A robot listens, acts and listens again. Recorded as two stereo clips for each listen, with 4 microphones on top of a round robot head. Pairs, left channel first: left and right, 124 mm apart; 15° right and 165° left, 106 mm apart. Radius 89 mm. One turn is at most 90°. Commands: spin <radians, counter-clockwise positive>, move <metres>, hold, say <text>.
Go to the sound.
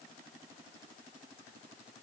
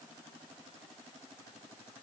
hold
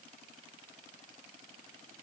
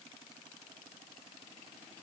hold
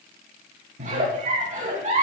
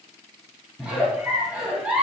spin -1.57
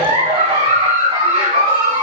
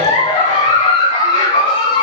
spin -0.61
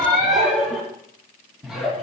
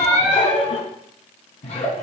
move 1.0
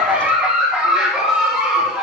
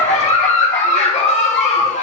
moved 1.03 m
move 1.0
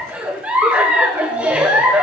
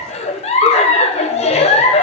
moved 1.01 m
spin -0.17
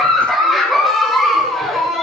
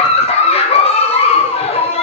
move 1.0
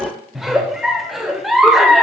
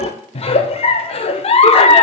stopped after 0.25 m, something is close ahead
say I am next to the giggle.